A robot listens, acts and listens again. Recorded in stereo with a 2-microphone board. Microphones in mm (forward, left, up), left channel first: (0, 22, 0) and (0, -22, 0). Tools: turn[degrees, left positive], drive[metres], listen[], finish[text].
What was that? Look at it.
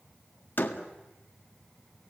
Thought: The door slam: about 50° left or 130° left.
Action: turn[50]
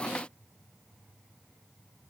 Action: listen[]
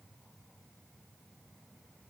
Action: finish[I heard a door slam, but can't make it out now. It was about straight ahead or 80° left.]